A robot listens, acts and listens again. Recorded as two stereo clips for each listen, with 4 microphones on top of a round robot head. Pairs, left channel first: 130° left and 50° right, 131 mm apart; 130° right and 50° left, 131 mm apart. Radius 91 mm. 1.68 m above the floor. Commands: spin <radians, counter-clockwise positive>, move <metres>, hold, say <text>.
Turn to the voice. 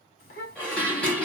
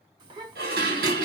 spin 1.83
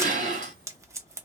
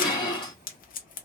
spin -0.26
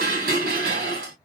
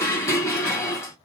hold
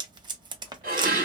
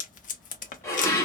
hold
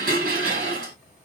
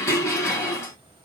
say Found it: a child speaking, straight ahead.